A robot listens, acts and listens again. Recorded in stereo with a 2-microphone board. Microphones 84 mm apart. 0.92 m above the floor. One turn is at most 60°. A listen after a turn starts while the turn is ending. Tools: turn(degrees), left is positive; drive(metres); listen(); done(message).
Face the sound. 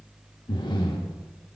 turn(degrees=60)
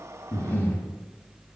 turn(degrees=25)
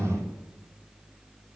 turn(degrees=20)
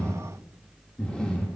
turn(degrees=10)
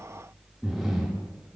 done("Facing the breathing.")